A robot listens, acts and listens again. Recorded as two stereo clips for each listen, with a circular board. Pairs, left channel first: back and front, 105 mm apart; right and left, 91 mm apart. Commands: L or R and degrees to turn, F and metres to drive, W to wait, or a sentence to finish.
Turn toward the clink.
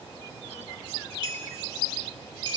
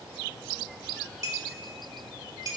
L35
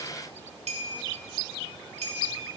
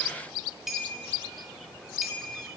Found it: a clink, straight ahead, 2 to 4 m away.